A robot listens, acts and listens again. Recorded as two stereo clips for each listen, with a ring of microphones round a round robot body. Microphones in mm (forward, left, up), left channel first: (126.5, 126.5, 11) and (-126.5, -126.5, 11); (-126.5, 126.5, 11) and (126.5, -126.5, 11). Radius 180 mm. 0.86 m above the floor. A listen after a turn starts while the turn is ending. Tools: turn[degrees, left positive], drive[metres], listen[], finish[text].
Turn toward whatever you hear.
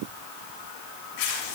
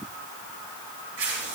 Thought: The tearing paper: 15° left.
Action: turn[15]
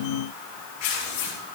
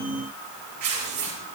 Action: finish[Found it: tearing paper, straight ahead.]